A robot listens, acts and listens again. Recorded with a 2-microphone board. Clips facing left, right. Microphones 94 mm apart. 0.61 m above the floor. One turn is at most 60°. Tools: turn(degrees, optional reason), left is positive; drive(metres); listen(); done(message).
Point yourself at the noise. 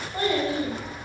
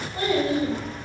turn(degrees=40, reason="The child speaking: about 40° left or 140° left.")
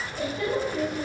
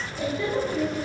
turn(degrees=60, reason="So it is at 110° left.")
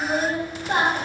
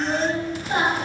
turn(degrees=60, reason="The child speaking is now 75° left.")
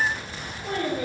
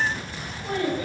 turn(degrees=45, reason="The child speaking is now 45° left.")
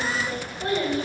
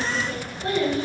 turn(degrees=30, reason="The child speaking is now 30° left.")
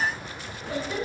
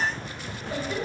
turn(degrees=15, reason="The child speaking is now 15° left.")
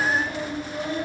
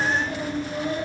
done("Facing the child speaking, 1 to 2 m away.")